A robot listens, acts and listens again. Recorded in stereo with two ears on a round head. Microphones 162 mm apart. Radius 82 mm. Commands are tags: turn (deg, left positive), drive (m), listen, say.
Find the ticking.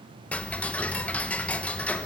<turn deg="30"/>
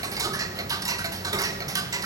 <turn deg="-20"/>
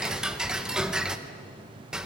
<say>Facing the ticking.</say>